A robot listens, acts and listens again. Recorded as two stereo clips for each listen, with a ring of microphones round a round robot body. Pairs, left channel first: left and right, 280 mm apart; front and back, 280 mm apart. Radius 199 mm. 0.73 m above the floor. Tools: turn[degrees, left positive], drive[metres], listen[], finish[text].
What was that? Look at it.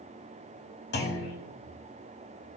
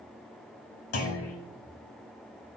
Thought: The clunk: 35° left.
Action: turn[35]
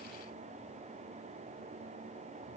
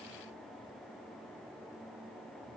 Action: finish[I heard a clunk from this way, but can't make it out now.]